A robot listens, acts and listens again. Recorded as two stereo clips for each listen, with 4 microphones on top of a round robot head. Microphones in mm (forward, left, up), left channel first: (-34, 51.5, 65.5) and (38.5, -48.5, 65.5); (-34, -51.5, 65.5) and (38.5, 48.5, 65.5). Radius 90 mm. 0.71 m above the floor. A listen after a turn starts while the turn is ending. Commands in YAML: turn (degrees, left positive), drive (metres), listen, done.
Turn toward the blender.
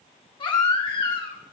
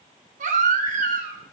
listen: true
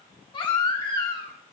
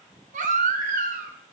listen: true
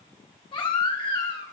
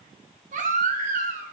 done: "I can't make out a blender, only a baby crying."